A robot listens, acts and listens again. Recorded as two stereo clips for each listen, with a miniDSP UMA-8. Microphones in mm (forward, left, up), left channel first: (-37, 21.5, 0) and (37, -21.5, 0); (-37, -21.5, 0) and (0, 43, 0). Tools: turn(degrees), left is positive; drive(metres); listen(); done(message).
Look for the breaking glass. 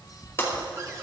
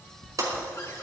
turn(degrees=90)
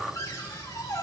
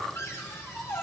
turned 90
done("I heard breaking glass from this way, but can't make it out now.")